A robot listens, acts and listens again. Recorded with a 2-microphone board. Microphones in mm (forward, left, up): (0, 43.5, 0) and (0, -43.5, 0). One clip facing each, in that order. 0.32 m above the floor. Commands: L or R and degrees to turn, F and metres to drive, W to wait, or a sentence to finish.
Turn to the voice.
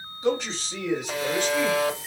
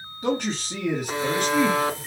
R55
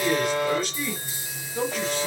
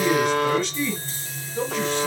L15
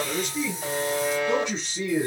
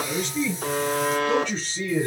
L15
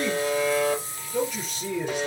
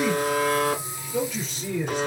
Facing the man speaking, 2 to 4 m away.